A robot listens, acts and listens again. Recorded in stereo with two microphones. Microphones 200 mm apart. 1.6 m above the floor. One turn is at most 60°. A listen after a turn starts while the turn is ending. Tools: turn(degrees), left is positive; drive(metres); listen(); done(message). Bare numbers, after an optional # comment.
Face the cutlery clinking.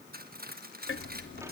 # The cutlery clinking: about 50° right or 130° right.
turn(-50)
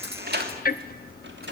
listen()
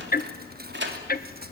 listen()
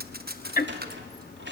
done("I heard cutlery clinking, but can't make it out now. It was about straight ahead or 80° right.")